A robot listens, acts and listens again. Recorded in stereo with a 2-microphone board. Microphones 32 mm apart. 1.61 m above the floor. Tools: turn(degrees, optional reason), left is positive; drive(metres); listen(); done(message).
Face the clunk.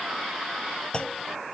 turn(degrees=35, reason="The clunk: about 35° left or 145° left.")
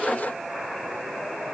listen()
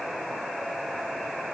done("I heard a clunk, but can't make it out now. It was about straight ahead or 110° left.")